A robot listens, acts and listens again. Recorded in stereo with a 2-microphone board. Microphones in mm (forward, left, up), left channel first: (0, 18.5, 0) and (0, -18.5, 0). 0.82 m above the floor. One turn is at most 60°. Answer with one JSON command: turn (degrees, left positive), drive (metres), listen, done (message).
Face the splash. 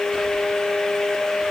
{"listen": true}
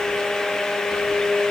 {"listen": true}
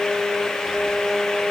{"done": "I can't make out a splash."}